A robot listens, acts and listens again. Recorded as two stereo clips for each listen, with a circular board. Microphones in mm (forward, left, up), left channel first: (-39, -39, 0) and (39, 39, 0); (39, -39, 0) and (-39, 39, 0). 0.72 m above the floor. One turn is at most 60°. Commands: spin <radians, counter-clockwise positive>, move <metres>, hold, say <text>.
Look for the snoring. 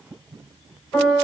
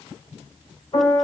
hold
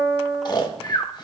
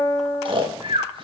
spin 1.05
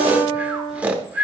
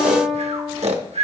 spin 1.05
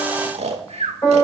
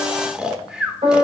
spin 0.96
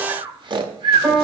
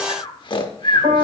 say Found it: snoring, straight ahead.